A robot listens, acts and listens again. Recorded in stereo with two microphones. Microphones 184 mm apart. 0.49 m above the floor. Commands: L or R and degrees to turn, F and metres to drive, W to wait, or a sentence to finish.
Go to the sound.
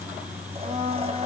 R35
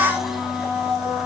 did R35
F1.0
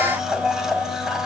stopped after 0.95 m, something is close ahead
Blocked. The blender is further on, straight ahead.